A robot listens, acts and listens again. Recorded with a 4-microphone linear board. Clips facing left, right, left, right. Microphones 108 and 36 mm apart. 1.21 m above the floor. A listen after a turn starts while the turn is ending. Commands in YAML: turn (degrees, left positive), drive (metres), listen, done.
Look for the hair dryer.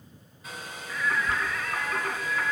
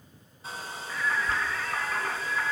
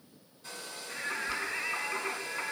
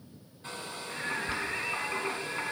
turn: -35
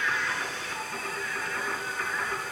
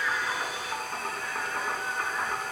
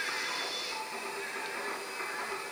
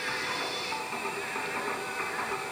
listen: true
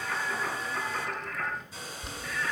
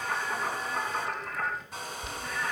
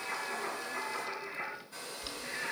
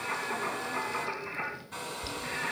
turn: -110
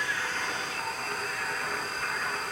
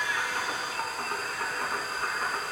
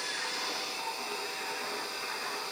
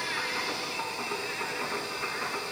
listen: true
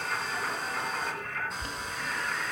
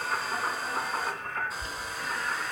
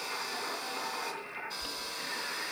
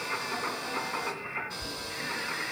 done: "Found it: a hair dryer, straight ahead, 2 to 4 m away."